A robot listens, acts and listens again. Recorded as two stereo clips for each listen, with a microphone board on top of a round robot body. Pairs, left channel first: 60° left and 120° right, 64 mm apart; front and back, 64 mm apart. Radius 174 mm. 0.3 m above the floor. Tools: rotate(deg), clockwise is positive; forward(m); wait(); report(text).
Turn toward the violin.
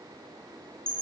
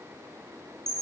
wait()
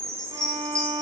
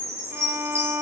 rotate(130)
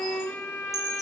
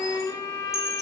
report("Found it: a violin, straight ahead.")